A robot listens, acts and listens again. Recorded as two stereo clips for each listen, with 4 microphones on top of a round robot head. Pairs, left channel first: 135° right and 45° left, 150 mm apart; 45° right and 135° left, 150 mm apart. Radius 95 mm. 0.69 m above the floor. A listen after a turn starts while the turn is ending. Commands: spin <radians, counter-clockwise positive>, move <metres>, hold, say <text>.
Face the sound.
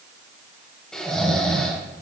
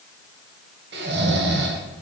spin 2.44
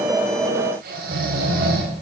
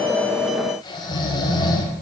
spin 0.35
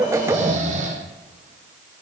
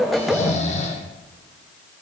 say Facing the snoring, 1 to 2 m away.